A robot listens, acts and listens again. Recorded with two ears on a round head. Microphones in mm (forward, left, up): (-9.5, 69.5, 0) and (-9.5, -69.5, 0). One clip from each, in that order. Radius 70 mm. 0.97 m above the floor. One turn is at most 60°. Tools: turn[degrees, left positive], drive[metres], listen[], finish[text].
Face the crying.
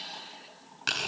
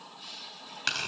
Action: listen[]
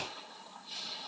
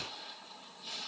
Action: listen[]
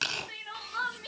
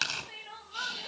Thought: The crying: about 25° left or 155° left.
Action: turn[25]
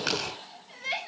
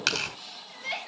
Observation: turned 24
Action: finish[Found it: crying, straight ahead.]